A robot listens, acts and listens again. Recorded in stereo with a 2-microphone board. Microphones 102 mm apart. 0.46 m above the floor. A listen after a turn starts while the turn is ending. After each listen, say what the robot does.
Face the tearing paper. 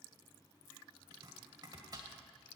Keep listening.
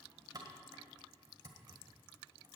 Keep listening.
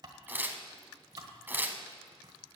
Turn 20° right.
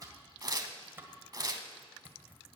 Turn 140° right.
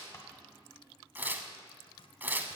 Turn 20° right.
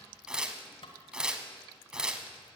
Turn 10° right.
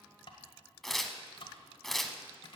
Found it: tearing paper, straight ahead.